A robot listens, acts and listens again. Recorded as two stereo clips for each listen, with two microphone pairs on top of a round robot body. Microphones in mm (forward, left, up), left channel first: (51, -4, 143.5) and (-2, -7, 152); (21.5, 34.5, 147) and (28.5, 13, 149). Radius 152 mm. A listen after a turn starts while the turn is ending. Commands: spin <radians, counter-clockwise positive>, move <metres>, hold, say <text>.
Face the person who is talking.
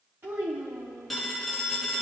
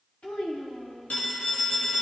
spin 2.44
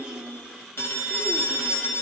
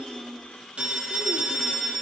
hold
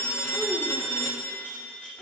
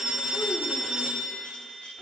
hold
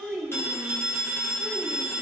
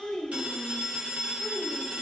spin 1.31
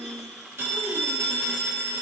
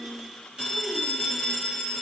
hold
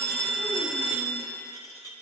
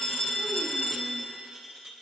hold
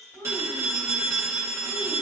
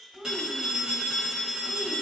spin -0.35
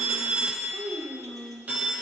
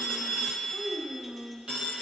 say Found it: a child speaking, straight ahead.